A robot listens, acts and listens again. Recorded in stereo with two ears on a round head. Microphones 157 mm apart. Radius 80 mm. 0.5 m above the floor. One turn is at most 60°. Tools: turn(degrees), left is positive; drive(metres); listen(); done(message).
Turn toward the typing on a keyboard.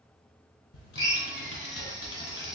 turn(degrees=60)
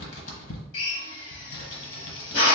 turn(degrees=60)
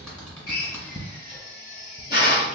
done("Found it: typing on a keyboard, straight ahead.")